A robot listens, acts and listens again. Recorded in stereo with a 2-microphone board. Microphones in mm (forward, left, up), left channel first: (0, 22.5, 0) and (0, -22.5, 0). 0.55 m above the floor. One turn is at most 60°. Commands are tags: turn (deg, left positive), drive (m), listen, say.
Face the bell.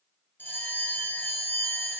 <turn deg="45"/>
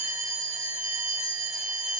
<say>Found it: a bell, straight ahead, under 1 m away.</say>